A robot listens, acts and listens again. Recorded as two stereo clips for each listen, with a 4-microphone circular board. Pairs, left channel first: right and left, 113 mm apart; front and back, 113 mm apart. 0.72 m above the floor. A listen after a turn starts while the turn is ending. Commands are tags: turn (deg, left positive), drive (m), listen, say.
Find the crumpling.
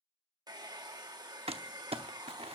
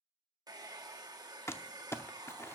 <turn deg="65"/>
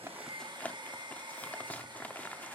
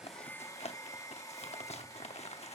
<turn deg="-15"/>
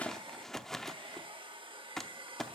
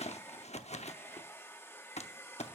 <say>Facing the crumpling.</say>